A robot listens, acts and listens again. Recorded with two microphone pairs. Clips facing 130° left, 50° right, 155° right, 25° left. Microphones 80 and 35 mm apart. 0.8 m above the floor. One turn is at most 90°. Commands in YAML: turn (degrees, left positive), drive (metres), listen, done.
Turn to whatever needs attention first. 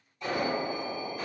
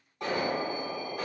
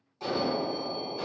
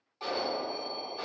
turn: -45
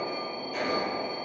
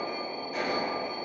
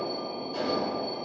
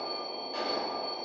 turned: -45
turn: -15
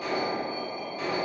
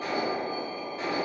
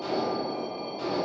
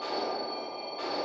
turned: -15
done: "Found it: an alarm, straight ahead, 1 to 2 m away."